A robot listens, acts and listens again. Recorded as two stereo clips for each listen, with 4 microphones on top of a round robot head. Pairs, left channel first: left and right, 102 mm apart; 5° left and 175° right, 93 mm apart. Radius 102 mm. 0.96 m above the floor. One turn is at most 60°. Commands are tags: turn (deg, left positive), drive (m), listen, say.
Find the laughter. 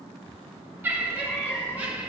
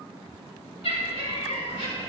<turn deg="-15"/>
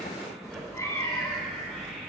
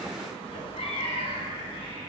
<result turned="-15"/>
<listen/>
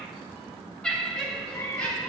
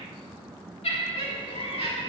<turn deg="10"/>
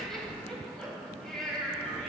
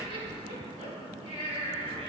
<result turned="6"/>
<say>Facing the laughter, over 4 m away.</say>